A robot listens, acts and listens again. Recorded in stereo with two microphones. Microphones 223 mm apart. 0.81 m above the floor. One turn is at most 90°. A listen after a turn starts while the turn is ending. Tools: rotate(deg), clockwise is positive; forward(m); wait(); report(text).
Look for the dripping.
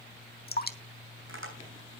rotate(-45)
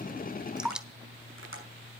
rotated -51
report("Found it: dripping, straight ahead, 1 to 2 m away.")